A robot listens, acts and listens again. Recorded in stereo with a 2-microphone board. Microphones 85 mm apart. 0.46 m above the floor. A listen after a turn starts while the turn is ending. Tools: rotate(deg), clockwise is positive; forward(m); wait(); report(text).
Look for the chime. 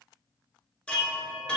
rotate(-30)
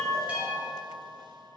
rotate(20)
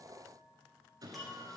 report("Found it: a chime, straight ahead.")